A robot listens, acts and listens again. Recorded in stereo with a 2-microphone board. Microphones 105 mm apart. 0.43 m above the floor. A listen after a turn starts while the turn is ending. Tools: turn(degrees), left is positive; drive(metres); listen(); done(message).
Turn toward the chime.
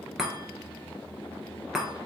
turn(degrees=-30)
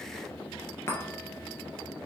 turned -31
turn(degrees=25)
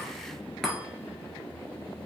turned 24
done("Facing the chime.")